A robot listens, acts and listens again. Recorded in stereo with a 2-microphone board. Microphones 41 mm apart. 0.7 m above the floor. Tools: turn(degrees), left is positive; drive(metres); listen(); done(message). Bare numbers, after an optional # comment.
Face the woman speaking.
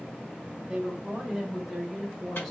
turn(30)
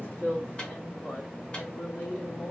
# So it is at 120° left.
turn(120)
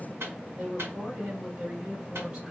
# The woman speaking is now 20° right.
turn(-20)
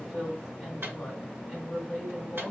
done("Facing the woman speaking, 2 to 4 m away.")